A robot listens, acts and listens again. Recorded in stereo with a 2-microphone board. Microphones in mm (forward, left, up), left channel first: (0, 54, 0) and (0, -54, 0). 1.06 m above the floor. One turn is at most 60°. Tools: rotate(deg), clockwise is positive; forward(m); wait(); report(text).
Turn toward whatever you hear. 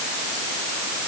wait()
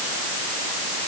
wait()
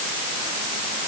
report("I can't make out anything.")